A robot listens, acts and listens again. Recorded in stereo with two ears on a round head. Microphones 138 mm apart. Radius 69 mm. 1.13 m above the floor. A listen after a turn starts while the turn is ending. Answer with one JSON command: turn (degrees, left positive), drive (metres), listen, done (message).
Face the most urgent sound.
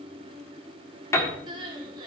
{"turn": -30}
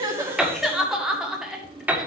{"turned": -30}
{"done": "Facing the crying, 1 to 2 m away."}